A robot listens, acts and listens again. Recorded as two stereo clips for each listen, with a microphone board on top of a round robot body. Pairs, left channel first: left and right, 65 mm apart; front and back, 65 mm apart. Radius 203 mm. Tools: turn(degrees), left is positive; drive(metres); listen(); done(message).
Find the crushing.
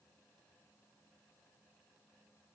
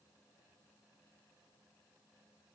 listen()
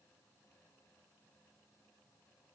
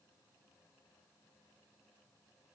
listen()
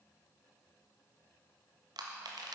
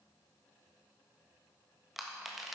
turn(degrees=-95)
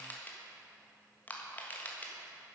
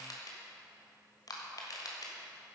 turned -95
turn(degrees=25)
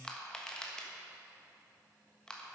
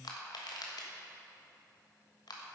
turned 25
turn(degrees=10)
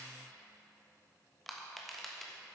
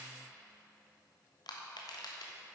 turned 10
done("Found it: crushing, straight ahead, 1 to 2 m away.")